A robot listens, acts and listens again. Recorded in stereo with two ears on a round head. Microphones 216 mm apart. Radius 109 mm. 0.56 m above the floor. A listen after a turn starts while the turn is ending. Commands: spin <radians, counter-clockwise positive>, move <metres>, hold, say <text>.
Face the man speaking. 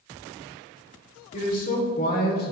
spin 0.79
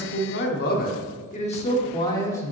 spin 0.17
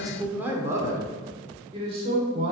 spin -0.52
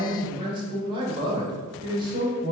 spin -0.35
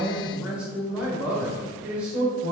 say Found it: a man speaking, straight ahead.